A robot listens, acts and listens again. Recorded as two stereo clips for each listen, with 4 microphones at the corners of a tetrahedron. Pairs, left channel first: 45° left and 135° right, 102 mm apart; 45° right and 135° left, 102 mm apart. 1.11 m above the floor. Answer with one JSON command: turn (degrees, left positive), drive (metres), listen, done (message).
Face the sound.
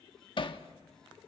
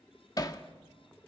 {"done": "Found it: hammering, straight ahead."}